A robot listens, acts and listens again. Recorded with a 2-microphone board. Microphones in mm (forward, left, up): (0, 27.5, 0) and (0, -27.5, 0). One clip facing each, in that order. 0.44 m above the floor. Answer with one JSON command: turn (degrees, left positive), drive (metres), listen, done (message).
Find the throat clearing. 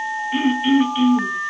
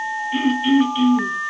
{"turn": 30}
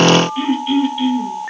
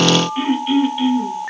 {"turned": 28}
{"turn": -15}
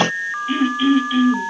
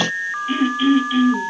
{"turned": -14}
{"done": "Found it: throat clearing, straight ahead, 2 to 4 m away."}